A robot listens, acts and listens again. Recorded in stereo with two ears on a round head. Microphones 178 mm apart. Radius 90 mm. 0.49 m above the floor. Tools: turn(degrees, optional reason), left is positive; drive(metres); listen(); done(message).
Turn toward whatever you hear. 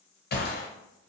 turn(degrees=50, reason="The gunshot: about 50° left or 130° left.")
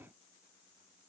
listen()
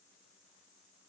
done("I heard a gunshot, but can't make it out now. It was about straight ahead or 80° left.")